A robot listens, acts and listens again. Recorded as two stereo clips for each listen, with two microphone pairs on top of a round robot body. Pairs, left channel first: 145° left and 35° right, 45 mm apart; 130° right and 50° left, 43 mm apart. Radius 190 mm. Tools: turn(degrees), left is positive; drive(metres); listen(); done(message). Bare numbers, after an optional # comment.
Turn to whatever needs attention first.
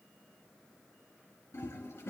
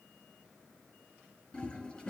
listen()
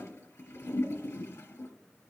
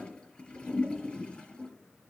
listen()
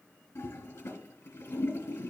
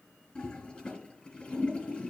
done("I can't make out anything urgent, only a toilet flushing.")